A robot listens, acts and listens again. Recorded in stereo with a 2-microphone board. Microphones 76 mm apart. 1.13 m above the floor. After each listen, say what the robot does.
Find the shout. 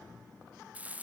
Keep listening.
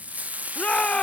Turn 30° left.
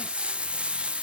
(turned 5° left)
Keep listening.
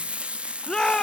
Turn 30° left.
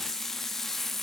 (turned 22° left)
Keep listening.
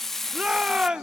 Turn 15° right.
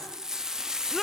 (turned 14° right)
Keep listening.
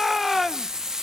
Facing the shout, under 1 m away.